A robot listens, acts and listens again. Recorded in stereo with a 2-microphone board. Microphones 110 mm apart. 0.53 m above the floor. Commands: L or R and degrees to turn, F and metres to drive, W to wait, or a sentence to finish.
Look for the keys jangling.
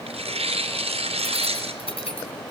L65
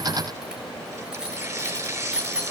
R10
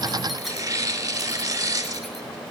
W
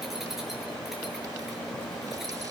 W
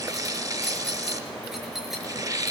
Facing the keys jangling.